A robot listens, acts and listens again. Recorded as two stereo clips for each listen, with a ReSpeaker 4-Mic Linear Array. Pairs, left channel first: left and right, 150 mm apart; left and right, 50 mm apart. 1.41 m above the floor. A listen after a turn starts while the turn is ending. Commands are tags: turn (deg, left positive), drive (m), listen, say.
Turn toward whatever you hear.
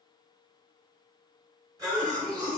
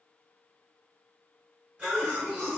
<turn deg="-25"/>
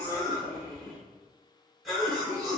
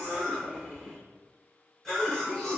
<say>Facing the cough, 1 to 2 m away.</say>